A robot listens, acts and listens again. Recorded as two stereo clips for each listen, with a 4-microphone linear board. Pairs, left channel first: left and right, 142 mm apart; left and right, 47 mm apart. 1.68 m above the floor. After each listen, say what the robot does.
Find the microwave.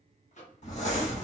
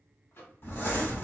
Turn 55° left.
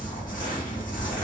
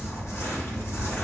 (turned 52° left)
Keep listening.
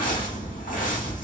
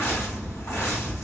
Keep listening.
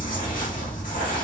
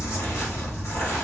I heard a microwave, but can't make it out now. It was about 5° left or 70° left.